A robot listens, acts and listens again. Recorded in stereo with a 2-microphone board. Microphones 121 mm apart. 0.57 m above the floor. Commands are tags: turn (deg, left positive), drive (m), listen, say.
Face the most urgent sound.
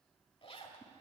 <listen/>
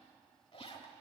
<listen/>
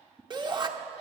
<turn deg="-40"/>
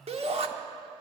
<turn deg="-90"/>
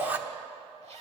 <turn deg="-20"/>
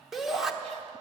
<say>Facing the shout.</say>